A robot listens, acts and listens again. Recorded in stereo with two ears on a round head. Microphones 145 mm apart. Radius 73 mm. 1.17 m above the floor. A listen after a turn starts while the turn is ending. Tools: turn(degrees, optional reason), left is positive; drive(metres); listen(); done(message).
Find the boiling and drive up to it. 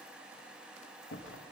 listen()
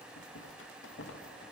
listen()
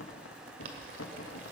turn(degrees=-55, reason="The boiling: about 55° right or 125° right.")
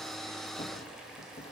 listen()
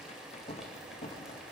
listen()
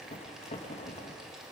done("I heard boiling, but can't make it out now. It was about straight ahead or 70° right. I did not reach it.")